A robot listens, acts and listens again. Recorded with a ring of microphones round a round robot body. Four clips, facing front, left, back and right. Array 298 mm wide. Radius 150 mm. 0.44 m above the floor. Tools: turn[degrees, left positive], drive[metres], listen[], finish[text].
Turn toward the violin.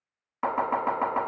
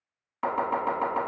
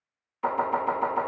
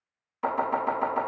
Action: listen[]
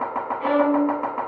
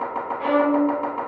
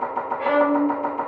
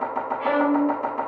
Thought: The violin: 170° left.
Action: turn[170]
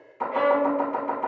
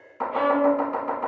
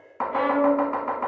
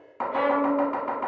Thought: The violin is now 10° right.
Action: turn[-10]
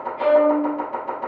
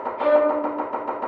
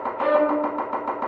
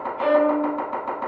Action: finish[Found it: a violin, straight ahead.]